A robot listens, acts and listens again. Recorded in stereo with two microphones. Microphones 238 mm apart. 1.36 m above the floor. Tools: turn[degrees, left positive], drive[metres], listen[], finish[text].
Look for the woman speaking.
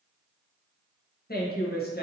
Thought: The woman speaking: about 40° left or 140° left.
Action: turn[40]
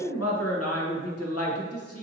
Thought: So it is at 100° left.
Action: turn[100]
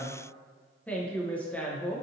Action: finish[Found it: a woman speaking, straight ahead, under 1 m away.]